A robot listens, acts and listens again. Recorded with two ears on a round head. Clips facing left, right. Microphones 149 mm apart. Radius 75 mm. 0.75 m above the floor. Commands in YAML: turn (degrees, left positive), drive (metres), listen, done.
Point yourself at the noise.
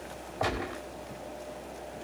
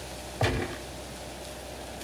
turn: -25
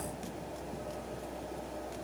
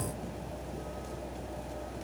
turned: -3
listen: true
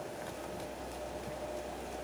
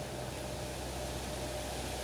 done: "I heard a gunshot, but can't make it out now. It was about 20° right or 155° right."